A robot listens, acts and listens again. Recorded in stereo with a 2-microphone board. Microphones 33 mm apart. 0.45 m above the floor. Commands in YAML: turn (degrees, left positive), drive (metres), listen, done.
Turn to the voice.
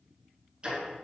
listen: true
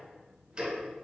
listen: true
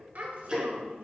turn: -60
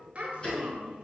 turn: -50
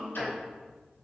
turn: 15
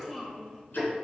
done: "Found it: a child speaking, straight ahead, 1 to 2 m away."